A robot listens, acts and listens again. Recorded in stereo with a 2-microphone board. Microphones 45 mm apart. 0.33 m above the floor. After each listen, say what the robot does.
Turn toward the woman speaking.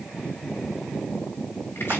Keep listening.
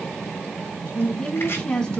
Turn 20° left.
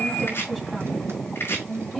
Turn 30° left.
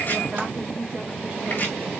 Keep listening.
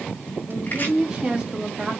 Turn 20° right.
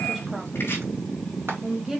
Found it: a woman speaking, straight ahead.